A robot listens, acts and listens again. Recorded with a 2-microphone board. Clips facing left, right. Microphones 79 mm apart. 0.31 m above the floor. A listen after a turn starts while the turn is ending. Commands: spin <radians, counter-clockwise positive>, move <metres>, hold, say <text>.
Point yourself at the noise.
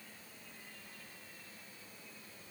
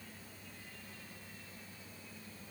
hold
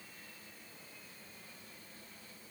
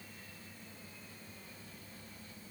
hold
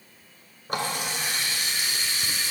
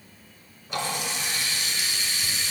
spin 0.87
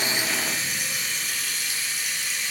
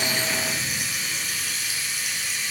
say Facing the running tap, 2 to 4 m away.